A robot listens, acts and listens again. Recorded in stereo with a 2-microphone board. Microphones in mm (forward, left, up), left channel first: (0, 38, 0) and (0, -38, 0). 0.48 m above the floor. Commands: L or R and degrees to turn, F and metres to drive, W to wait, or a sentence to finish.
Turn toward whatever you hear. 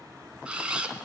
R30
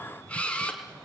L20
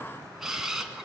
Facing the camera shutter.